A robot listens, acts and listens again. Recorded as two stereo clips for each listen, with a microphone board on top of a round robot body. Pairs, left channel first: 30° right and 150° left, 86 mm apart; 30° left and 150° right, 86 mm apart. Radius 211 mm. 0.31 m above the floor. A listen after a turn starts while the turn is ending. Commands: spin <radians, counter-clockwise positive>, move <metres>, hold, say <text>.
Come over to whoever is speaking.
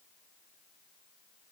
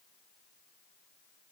hold
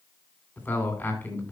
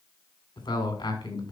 spin 0.70
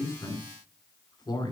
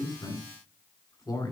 move 1.0
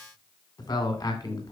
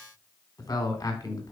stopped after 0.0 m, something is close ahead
say Something is in my way. I am facing the man speaking but have not reached it.